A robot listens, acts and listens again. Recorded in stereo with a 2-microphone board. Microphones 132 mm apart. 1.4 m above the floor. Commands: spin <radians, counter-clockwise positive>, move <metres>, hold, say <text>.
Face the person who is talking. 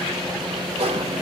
hold
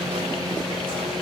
hold
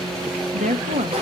spin -1.57
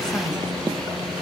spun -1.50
hold
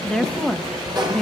say Found it: a woman speaking, straight ahead, 1 to 2 m away.